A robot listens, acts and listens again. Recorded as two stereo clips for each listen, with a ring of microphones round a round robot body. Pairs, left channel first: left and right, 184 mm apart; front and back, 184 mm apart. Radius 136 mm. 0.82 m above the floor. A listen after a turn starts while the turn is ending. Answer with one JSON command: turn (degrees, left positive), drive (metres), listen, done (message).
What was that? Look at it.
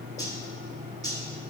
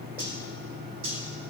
{"turn": -155}
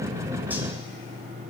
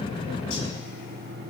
{"listen": true}
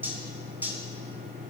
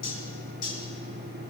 {"turn": -10}
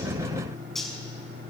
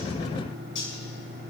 {"done": "Found it: cutlery clinking, straight ahead."}